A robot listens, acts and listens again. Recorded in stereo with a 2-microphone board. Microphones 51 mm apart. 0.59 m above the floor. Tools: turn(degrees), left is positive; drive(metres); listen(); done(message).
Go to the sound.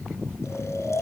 turn(degrees=70)
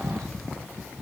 listen()
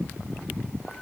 listen()
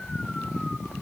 done("I heard snoring, but can't make it out now. It was about straight ahead or 40° left. I did not reach it.")